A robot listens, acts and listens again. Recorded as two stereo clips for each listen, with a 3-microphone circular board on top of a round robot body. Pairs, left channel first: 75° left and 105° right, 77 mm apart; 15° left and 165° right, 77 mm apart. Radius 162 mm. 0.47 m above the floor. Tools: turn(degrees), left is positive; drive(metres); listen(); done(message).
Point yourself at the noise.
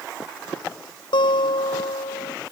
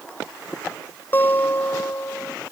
turn(degrees=80)
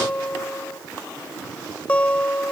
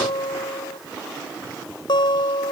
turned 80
done("Facing the guitar.")